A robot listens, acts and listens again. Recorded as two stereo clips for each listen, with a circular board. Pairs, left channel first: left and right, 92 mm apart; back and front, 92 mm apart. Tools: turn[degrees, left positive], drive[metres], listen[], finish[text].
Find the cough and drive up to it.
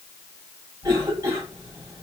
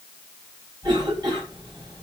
Thought: The cough: 35° right.
Action: turn[-35]
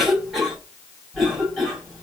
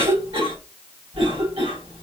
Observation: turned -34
Action: drive[1.0]
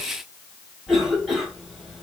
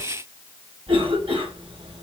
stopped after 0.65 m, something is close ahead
Action: finish[Blocked. The cough is further on, straight ahead.]